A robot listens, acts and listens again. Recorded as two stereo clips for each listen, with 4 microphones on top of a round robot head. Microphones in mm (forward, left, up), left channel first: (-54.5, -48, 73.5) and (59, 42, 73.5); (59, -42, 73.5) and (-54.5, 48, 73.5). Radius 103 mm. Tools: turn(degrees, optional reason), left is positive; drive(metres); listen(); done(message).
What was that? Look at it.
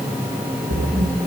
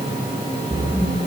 turn(degrees=50, reason="The splash: 50° left.")
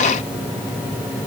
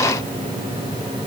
done("Facing where the splash came from. I can't hear it now.")